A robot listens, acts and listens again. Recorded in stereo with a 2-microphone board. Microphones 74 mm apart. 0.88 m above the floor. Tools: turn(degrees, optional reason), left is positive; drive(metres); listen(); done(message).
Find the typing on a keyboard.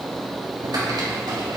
turn(degrees=-90)
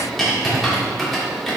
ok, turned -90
done("Facing the typing on a keyboard.")